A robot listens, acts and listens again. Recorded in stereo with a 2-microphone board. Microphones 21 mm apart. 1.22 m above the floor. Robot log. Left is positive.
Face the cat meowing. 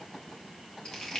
cmd idle
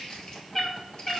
note: The cat meowing: about 25° left or 155° left.
cmd yaw +25
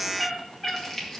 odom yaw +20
note: The cat meowing: about 15° left or 165° left.
cmd yaw +15
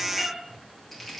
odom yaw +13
cmd yaw +30
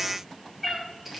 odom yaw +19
end: Facing the cat meowing.